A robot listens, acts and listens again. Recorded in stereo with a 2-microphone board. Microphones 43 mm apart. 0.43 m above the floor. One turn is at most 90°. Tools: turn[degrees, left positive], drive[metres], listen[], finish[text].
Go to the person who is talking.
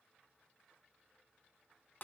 Action: listen[]
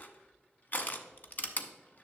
Action: listen[]
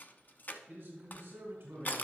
Thought: The man speaking: about 55° right or 125° right.
Action: turn[-55]
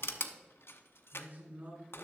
Thought: So it is at 60° right.
Action: turn[-60]
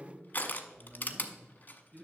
Thought: The man speaking is now 25° right.
Action: turn[-25]
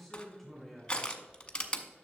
Action: drive[1.0]
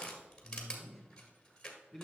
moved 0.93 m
Thought: The man speaking is now 10° right.
Action: turn[-10]
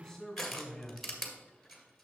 Action: drive[1.0]
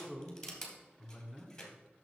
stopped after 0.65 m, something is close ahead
Action: finish[I am next to the man speaking.]